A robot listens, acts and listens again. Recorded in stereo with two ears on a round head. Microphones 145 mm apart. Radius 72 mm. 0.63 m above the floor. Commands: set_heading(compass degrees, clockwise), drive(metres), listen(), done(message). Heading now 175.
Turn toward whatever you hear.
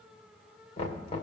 set_heading(135)
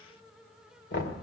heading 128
set_heading(38)
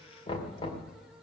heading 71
set_heading(36)
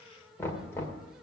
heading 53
set_heading(38)
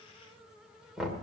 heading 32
done("Facing the knocking, 2 to 4 m away.")